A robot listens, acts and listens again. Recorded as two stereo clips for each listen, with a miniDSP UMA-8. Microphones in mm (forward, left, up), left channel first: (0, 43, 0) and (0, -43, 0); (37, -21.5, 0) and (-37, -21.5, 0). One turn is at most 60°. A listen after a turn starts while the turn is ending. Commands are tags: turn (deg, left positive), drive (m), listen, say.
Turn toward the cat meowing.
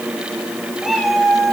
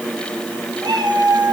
<turn deg="60"/>
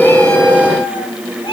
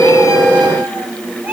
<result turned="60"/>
<turn deg="60"/>
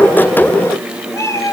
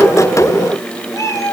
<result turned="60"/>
<turn deg="35"/>
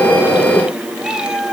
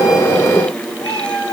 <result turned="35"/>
<turn deg="-10"/>
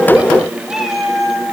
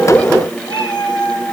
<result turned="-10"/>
<say>Facing the cat meowing, 2 to 4 m away.</say>